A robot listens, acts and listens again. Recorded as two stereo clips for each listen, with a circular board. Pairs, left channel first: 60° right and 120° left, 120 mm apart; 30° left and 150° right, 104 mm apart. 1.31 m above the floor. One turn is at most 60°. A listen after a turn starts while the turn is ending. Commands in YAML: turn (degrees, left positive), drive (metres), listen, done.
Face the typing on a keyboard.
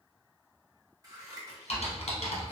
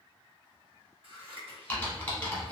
turn: -45
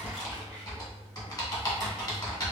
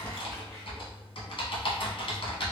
done: "Found it: typing on a keyboard, straight ahead, 1 to 2 m away."